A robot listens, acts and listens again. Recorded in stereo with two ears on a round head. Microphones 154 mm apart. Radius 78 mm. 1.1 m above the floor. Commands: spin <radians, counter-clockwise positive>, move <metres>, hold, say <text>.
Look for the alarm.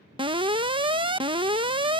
spin -0.52
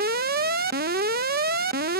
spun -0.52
spin -2.09
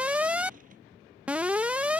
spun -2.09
spin -0.17
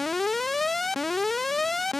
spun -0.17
say Facing the alarm.